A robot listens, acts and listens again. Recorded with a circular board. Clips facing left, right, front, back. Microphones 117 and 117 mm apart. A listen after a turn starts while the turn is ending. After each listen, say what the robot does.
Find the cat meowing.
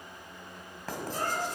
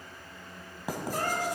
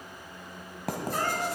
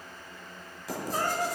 Turn 110° right.
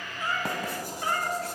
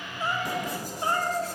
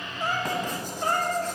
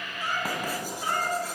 Turn 40° right.
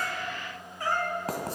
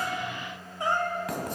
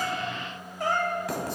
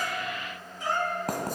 Turn 30° right.
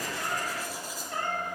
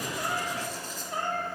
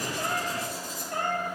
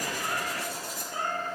Turn 20° right.
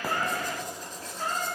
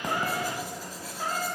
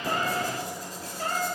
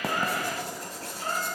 Facing the cat meowing.